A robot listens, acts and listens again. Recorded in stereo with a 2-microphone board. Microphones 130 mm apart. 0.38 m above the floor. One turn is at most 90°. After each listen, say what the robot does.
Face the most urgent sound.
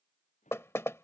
Keep listening.
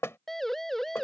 Turn 30° left.
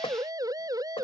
Turn 25° right.
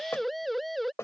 Found it: a siren, straight ahead.